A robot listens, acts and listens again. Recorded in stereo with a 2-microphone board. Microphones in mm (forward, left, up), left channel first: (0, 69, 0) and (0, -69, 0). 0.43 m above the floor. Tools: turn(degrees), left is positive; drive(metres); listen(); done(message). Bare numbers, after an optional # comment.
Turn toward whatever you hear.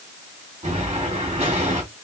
# The explosion: about 50° right or 130° right.
turn(-50)
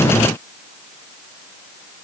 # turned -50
listen()
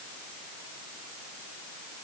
done("I heard an explosion, but can't make it out now. It was about straight ahead or 80° right.")